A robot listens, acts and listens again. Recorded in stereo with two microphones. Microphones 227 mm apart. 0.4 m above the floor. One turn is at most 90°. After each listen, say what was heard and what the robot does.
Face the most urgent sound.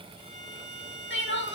The crying: about 55° left or 125° left. Turn 55° left.
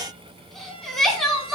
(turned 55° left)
Found it: crying, straight ahead.